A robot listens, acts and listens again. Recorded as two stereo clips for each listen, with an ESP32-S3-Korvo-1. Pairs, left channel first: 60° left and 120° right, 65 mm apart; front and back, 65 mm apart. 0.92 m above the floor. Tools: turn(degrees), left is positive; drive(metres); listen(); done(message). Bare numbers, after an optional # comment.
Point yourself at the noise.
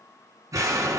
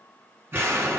# The explosion: 130° right.
turn(-130)
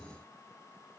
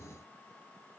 done("I heard an explosion from this way, but can't make it out now.")